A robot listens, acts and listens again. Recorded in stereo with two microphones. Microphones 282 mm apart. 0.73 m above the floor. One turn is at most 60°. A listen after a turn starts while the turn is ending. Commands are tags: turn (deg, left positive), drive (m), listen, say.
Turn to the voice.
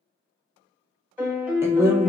<turn deg="-30"/>
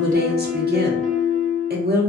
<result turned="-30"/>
<turn deg="-60"/>
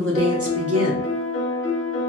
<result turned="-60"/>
<turn deg="-60"/>
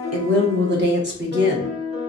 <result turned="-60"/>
<turn deg="-45"/>
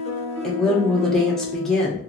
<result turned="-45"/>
<say>Found it: a woman speaking, straight ahead.</say>